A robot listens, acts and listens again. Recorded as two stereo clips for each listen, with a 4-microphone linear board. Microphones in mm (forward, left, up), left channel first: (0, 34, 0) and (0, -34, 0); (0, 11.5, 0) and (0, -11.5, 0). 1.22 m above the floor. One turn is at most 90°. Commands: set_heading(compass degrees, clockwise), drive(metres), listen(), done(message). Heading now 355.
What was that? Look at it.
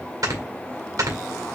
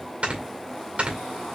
set_heading(55)
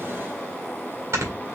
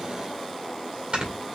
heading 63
set_heading(108)
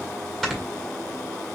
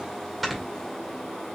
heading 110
done("Found it: snoring, straight ahead, 2 to 4 m away.")